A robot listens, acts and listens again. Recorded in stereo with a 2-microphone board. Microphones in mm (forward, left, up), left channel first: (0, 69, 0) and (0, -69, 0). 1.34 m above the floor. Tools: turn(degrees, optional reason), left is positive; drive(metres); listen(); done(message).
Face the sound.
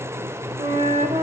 turn(degrees=-50, reason="The flute: about 50° right or 130° right.")
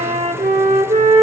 turn(degrees=-75, reason="So it is at 75° right.")
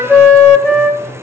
turn(degrees=10, reason="The flute is now 10° left.")
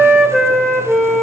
done("Facing the flute, 1 to 2 m away.")